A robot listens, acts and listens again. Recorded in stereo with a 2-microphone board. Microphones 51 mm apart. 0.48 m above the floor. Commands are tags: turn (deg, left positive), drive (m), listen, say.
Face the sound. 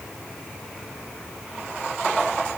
<listen/>
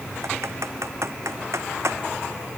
<turn deg="-90"/>
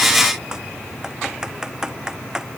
<turn deg="-15"/>
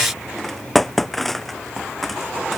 <say>Found it: typing on a keyboard, straight ahead.</say>